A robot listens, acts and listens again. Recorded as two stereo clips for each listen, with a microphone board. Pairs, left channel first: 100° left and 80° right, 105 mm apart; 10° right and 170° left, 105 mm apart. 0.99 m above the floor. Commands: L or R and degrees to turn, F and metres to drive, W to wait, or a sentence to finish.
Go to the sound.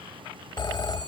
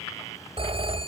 L145
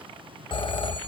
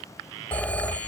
L65
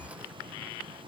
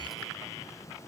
W
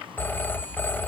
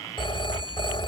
L30
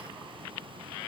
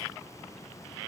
W
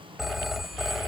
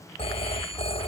L10
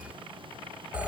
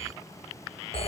F1.0
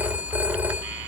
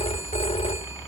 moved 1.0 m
F1.0
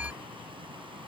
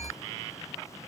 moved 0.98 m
F1.0
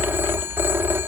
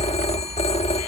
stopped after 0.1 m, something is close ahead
I am next to the phone ringing.